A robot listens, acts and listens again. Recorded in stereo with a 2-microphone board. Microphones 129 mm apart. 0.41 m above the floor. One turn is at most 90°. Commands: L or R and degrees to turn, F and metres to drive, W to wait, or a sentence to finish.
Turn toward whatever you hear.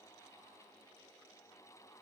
W
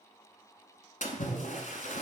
L90
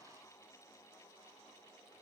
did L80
L10
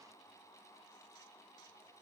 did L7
I heard a splash from this way, but can't make it out now.